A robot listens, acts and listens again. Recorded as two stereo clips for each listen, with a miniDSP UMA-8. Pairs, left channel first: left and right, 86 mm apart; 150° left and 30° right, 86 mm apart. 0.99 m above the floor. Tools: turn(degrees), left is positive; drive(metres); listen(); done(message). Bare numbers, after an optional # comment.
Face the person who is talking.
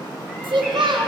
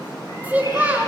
# The child speaking: 100° right.
turn(-100)
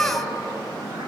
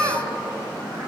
# The child speaking is now 15° left.
turn(15)
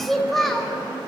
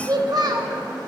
done("Facing the child speaking, 1 to 2 m away.")